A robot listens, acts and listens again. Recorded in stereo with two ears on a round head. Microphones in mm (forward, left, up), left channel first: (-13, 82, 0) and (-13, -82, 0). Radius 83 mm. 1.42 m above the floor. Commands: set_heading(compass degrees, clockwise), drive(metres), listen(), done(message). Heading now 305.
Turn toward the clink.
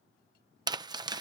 listen()
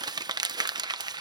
listen()
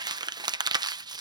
done("I can't make out a clink, only crumpling.")